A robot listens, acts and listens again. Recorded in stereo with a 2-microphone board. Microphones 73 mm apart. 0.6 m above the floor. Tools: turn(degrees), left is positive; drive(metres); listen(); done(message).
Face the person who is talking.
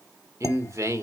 turn(degrees=-45)
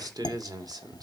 turn(degrees=-85)
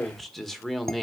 done("Found it: a man speaking, straight ahead, 1 to 2 m away.")